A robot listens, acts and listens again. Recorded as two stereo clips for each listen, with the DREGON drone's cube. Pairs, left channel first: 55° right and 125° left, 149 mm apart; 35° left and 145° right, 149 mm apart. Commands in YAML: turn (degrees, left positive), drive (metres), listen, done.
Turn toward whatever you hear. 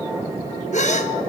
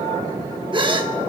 turn: -90
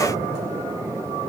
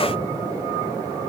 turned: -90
done: "Facing where the gasp came from. I can't hear it now."